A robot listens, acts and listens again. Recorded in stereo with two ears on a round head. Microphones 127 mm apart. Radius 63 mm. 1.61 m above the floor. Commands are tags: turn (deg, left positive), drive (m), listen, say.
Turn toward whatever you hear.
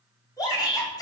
<turn deg="25"/>
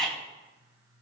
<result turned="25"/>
<say>Found it: a shout, straight ahead.</say>